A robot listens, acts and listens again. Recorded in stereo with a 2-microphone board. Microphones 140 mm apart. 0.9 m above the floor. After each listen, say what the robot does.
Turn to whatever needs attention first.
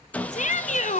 Turn 65° left.
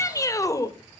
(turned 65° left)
Turn 25° left.
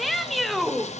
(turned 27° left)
Found it: a shout, straight ahead, 1 to 2 m away.